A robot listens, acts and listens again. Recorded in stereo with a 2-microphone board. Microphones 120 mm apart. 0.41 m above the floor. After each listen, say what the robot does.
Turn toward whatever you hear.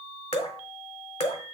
Turn 65° left.
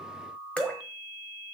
Turn 10° left.
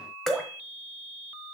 Found it: dripping, straight ahead, 1 to 2 m away.